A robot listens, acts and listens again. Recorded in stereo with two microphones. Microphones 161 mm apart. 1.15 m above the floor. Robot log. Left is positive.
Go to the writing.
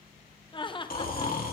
cmd idle
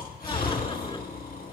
cmd idle
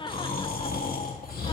end: I can't make out writing, only laughter and snoring.